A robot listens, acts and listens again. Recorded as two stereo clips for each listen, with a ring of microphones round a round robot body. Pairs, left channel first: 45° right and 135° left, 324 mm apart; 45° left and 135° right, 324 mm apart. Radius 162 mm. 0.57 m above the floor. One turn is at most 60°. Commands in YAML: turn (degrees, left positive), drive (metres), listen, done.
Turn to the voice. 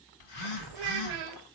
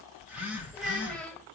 turn: 60
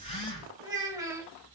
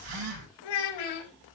turn: 55
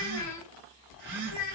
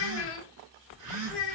turn: -10
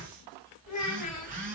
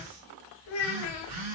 done: "Facing the child speaking, 2 to 4 m away."